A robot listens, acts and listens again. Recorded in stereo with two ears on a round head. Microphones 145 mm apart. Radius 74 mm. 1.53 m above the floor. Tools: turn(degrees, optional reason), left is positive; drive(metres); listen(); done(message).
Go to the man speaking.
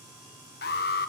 listen()
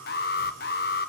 listen()
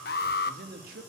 turn(degrees=-55, reason="The man speaking: about 55° right or 125° right.")
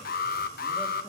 listen()
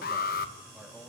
listen()
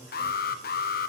done("I heard a man speaking, but can't make it out now. It was about straight ahead or 70° right. I did not reach it.")